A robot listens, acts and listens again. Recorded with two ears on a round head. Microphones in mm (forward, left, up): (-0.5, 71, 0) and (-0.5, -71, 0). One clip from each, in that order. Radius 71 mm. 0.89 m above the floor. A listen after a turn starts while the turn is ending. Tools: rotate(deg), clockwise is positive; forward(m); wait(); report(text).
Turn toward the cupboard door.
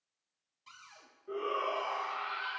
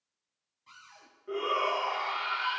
rotate(-90)
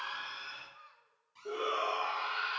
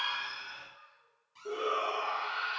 rotate(10)
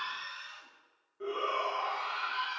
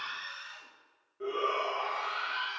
wait()
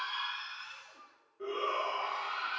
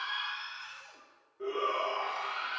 wait()
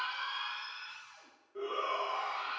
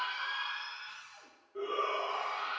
report("Found it: a cupboard door, straight ahead, over 4 m away.")